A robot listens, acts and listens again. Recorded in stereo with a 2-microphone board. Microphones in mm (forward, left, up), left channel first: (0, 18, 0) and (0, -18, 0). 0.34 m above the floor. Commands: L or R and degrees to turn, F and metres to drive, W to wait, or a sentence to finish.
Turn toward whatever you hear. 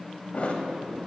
L45
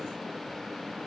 W
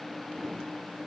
I heard a thud, but can't make it out now. It was about straight ahead or 90° left.